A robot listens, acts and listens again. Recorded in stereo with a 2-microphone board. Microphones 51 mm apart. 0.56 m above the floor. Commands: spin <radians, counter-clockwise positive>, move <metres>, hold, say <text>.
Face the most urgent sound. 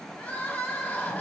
spin 0.52
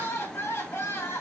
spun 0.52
spin 2.09
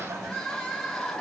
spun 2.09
spin 0.17
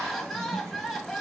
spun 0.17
say Facing the crying.